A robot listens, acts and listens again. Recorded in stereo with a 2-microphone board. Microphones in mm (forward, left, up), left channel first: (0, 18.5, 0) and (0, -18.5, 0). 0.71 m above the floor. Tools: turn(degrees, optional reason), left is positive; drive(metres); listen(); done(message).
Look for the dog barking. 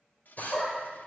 turn(degrees=30)
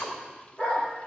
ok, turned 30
turn(degrees=140, reason="So it is at 140° left.")
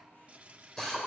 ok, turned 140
listen()
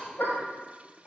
turn(degrees=50, reason="The dog barking is now 50° left.")
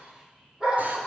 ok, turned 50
turn(degrees=-15, reason="The dog barking is now 15° right.")
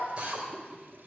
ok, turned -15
listen()
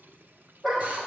done("Facing the dog barking.")